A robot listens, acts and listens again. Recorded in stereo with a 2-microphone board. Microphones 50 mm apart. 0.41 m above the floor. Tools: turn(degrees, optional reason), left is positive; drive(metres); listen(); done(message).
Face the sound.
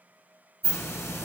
turn(degrees=60, reason="The hiss: about 60° left or 120° left.")
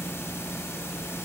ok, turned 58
turn(degrees=60, reason="So it is at 60° left.")
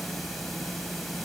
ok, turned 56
done("Found it: a hiss, straight ahead.")